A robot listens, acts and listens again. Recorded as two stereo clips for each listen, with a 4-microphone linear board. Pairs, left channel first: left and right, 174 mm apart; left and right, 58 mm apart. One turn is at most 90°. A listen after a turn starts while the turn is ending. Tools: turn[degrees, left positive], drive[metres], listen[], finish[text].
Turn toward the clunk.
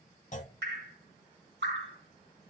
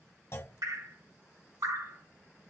Thought: The clunk: about 45° left or 135° left.
Action: turn[45]
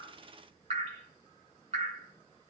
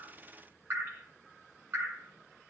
Action: listen[]
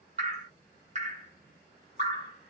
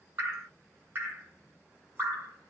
Action: finish[I heard a clunk, but can't make it out now. It was about straight ahead or 90° left.]